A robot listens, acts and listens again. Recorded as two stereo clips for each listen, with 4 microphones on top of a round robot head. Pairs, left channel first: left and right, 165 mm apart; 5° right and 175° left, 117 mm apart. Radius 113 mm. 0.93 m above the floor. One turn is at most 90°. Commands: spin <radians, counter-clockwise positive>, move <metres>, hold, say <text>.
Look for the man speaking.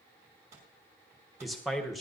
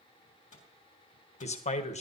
say Found it: a man speaking, straight ahead, 1 to 2 m away.